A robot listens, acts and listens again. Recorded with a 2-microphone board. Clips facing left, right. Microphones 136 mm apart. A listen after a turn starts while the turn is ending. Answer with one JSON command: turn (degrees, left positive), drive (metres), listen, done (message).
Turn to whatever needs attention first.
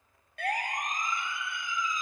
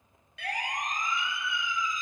{"turn": 50}
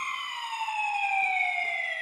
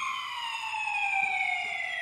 {"turn": 75}
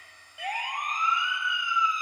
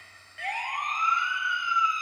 {"turn": 15}
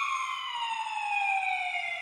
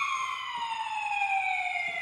{"done": "Facing the siren."}